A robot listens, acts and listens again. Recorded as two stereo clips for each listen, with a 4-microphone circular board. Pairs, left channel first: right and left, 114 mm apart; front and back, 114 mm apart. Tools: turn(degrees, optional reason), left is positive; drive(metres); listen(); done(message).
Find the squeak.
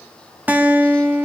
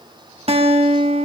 listen()
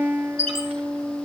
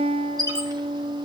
turn(degrees=125, reason="The squeak: 125° left.")
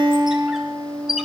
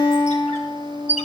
done("Facing the squeak.")